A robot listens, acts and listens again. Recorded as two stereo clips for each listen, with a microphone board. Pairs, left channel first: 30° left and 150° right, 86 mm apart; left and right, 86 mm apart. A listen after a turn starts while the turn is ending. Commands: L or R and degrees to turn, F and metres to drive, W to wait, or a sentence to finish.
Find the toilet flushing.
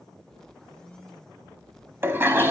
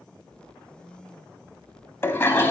L150
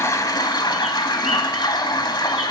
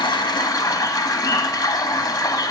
L55
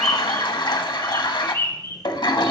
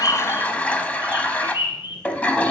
L20
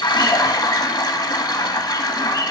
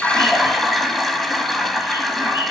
Found it: a toilet flushing, straight ahead.